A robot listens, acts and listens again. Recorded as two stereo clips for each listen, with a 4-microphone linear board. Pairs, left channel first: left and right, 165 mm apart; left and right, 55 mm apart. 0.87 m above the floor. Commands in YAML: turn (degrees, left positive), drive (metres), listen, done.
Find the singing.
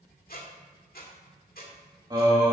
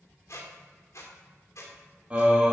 turn: -20
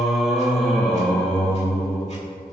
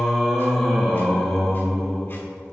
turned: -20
turn: 15
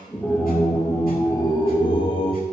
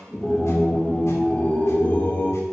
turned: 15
turn: 35
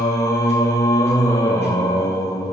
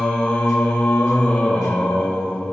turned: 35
turn: 20
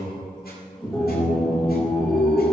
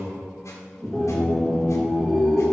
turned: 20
done: "Found it: singing, straight ahead, 1 to 2 m away."